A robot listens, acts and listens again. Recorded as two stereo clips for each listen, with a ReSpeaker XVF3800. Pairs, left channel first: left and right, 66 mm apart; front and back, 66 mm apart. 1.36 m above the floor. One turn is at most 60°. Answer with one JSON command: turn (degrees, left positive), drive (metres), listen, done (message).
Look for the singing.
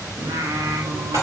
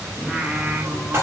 {"turn": -60}
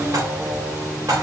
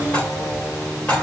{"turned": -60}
{"turn": -50}
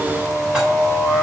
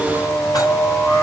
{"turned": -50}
{"done": "Found it: singing, straight ahead, 2 to 4 m away."}